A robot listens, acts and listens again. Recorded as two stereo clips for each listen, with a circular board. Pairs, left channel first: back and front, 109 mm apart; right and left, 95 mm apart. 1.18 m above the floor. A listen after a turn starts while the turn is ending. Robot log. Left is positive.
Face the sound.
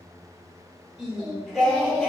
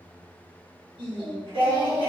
note: The singing: 100° left.
cmd yaw +100
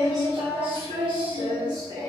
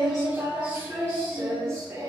note: The singing is now 45° left.
cmd yaw +45
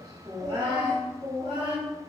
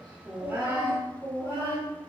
note: The singing is now 30° left.
cmd yaw +30
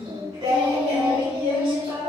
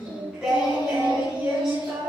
note: The singing is now 10° left.
cmd yaw +10
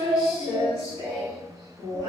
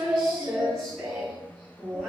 end: Found it: singing, straight ahead, 1 to 2 m away.